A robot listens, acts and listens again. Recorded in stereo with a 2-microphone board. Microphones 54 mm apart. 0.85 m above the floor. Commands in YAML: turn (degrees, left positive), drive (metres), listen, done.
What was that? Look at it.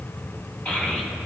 turn: 25
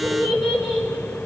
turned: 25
done: "Found it: a child speaking, straight ahead, over 4 m away."